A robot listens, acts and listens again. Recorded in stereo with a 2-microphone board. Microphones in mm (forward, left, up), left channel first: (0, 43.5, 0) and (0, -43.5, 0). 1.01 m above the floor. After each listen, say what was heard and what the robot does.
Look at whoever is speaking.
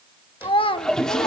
Turn 90° left.
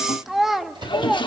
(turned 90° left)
Found it: a child speaking, straight ahead, 1 to 2 m away.